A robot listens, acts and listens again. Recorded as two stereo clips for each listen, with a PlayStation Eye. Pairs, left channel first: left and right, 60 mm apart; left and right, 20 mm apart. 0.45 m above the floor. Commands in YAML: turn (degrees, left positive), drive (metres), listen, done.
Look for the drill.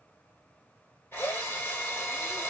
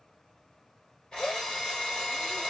turn: 45
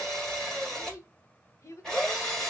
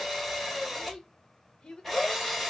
turn: 10
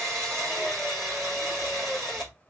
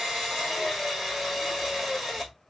done: "Found it: a drill, straight ahead."